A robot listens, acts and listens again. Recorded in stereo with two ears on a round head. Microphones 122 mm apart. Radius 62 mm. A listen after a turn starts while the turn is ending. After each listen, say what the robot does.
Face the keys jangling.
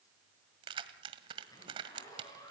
Turn 35° right.
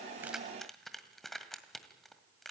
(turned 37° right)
Found it: keys jangling, straight ahead.